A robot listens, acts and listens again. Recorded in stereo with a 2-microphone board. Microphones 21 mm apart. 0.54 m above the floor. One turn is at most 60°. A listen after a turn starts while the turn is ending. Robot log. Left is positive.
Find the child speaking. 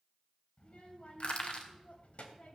note: The child speaking: about 70° left or 110° left.
cmd yaw +60
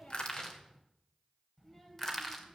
note: So it is at 15° left.
cmd yaw +15
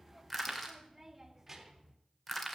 note: The child speaking is now 10° right.
cmd yaw -10
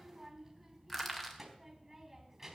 note: The child speaking is now 10° right.
cmd yaw -10
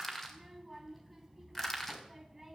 end: Facing the child speaking.